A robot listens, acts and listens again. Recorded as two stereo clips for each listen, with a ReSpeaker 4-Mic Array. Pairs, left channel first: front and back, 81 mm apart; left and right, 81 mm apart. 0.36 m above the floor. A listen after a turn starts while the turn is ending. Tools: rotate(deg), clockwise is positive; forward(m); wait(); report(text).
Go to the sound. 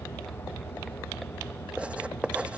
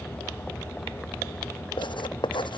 rotate(-100)
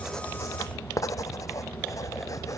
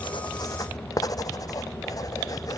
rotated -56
rotate(-45)
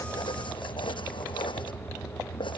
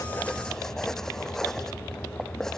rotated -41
forward(1.0)
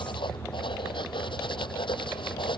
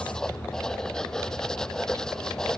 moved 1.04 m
rotate(-10)
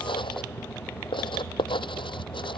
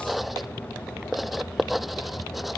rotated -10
forward(1.0)
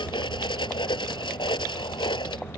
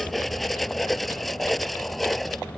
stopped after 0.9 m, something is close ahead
report("I am next to the writing.")